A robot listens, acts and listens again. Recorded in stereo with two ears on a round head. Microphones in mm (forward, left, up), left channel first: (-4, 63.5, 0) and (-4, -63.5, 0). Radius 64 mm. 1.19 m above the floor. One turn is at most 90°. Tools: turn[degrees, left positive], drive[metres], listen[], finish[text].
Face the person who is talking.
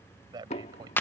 Thought: The man speaking: about 30° right or 150° right.
Action: turn[-30]
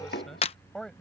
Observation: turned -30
Action: finish[Facing the man speaking.]